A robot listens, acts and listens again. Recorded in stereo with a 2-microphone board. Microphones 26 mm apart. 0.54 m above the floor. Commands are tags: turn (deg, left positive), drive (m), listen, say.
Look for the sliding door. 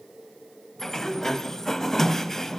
<turn deg="20"/>
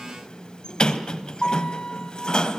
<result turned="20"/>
<turn deg="145"/>
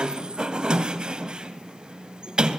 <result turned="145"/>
<turn deg="-35"/>
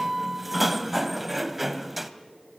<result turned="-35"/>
<say>Facing the sliding door.</say>